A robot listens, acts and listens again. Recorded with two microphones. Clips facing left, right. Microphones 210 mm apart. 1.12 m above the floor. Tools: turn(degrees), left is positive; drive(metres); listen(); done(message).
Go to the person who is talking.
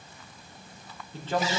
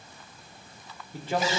turn(degrees=-30)
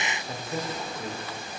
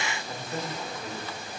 turn(degrees=15)
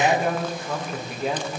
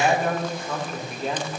drive(metres=1.0)
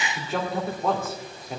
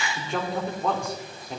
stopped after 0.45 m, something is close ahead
done("Blocked. The man speaking is further on, straight ahead.")